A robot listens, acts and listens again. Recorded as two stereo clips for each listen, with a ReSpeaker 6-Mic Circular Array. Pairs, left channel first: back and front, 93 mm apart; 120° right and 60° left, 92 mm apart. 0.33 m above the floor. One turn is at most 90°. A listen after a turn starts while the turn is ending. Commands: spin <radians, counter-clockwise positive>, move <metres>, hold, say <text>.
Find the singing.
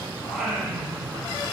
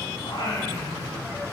spin -1.57
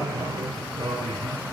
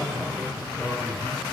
spin -0.35
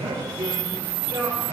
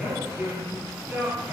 spin -0.17
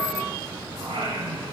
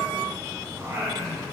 say Facing the singing, over 4 m away.